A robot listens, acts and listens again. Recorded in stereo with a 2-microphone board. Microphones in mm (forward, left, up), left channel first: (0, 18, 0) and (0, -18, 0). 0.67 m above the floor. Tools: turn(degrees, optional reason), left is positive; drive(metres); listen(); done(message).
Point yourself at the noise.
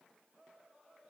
listen()
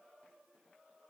listen()
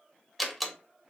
turn(degrees=30)
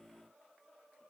listen()
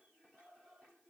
done("I heard a door slam, but can't make it out now. It was about 30° right or 150° left.")